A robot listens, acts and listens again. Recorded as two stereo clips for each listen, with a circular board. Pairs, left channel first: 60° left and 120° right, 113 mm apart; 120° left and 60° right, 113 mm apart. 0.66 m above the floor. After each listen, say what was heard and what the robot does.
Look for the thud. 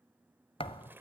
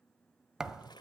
The thud: 25° left. Turn 25° left.
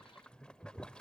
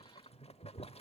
Facing where the thud came from. I can't hear it now.